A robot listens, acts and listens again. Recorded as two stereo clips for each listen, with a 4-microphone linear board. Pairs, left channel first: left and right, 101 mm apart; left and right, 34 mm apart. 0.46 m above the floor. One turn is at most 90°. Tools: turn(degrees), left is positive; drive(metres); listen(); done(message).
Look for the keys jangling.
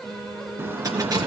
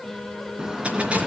turn(degrees=-40)
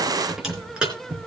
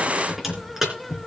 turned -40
turn(degrees=-10)
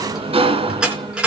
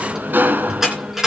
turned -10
turn(degrees=-10)
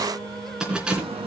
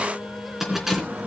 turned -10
turn(degrees=-10)
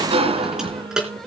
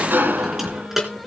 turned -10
turn(degrees=-10)
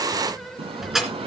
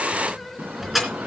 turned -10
done("Facing the keys jangling.")